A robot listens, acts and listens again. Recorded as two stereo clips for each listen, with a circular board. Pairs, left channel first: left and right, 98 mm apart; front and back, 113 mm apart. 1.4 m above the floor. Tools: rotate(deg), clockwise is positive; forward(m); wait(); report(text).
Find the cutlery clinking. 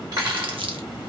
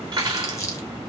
rotate(135)
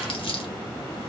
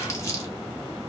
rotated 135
wait()
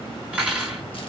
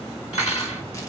rotate(10)
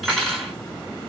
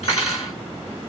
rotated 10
report("Found it: cutlery clinking, straight ahead, 1 to 2 m away.")